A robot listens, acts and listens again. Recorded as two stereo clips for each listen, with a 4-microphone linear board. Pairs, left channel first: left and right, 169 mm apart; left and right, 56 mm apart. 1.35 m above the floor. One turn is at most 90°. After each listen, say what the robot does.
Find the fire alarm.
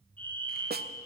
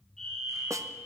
Turn 30° left.
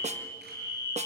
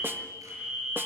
Turn 20° right.
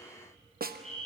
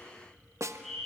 Found it: a fire alarm, straight ahead, over 4 m away.